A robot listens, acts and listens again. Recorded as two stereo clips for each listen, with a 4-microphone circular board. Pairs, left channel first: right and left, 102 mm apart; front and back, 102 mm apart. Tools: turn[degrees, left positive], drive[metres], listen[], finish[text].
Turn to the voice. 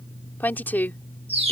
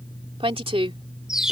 Thought: The woman speaking: 160° right.
Action: turn[-160]
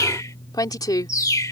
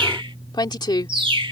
Thought: The woman speaking is now 40° right.
Action: turn[-40]
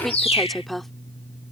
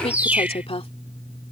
Action: finish[Facing the woman speaking.]